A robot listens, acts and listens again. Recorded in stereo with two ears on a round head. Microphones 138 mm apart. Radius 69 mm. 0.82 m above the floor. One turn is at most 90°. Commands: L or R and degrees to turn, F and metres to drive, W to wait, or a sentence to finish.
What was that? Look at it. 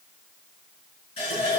L40
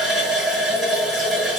Facing the running tap, over 4 m away.